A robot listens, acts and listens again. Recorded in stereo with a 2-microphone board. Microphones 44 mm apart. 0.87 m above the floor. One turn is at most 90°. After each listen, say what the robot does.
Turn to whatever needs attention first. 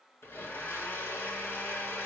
Keep listening.
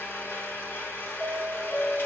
Turn 30° left.
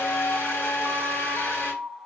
Turn 90° left.
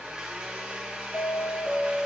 Turn 60° left.
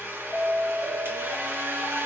Turn 10° left.
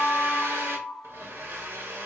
Facing the alarm.